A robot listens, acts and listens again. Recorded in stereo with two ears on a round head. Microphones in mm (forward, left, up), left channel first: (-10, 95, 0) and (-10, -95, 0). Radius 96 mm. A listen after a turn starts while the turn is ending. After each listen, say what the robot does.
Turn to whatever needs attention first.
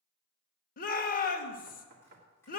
Turn 45° left.
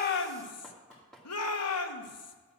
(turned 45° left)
Turn 90° left.
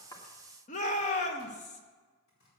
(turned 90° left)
Turn 35° left.
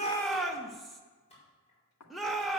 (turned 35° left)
Found it: a shout, straight ahead.